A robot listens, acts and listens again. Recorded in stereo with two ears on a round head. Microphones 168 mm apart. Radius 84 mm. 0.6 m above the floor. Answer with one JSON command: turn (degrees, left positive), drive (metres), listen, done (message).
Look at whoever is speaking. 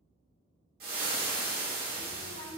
{"turn": -40}
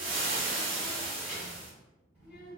{"done": "Facing the child speaking."}